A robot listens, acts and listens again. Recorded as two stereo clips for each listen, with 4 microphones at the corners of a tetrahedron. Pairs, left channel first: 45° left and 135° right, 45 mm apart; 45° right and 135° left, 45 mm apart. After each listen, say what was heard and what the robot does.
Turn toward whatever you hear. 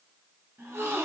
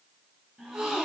The gasp: 150° right. Turn 150° right.
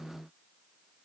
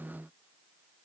Facing where the gasp came from. I can't hear it now.